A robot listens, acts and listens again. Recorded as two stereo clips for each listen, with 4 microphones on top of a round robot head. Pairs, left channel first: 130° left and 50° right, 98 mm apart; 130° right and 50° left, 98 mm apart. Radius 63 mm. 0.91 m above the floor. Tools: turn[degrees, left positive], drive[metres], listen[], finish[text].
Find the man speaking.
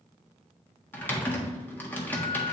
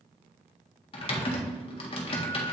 Action: listen[]
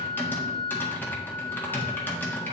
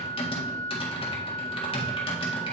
Action: listen[]
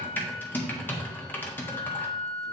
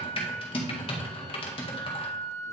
Action: finish[I can't make out a man speaking, only typing on a keyboard and a flute.]